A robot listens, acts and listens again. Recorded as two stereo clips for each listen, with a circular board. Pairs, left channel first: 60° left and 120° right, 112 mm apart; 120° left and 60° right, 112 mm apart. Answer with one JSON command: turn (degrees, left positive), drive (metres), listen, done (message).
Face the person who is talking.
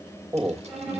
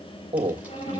{"turn": -55}
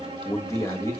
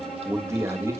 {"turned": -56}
{"done": "Found it: a man speaking, straight ahead, 1 to 2 m away."}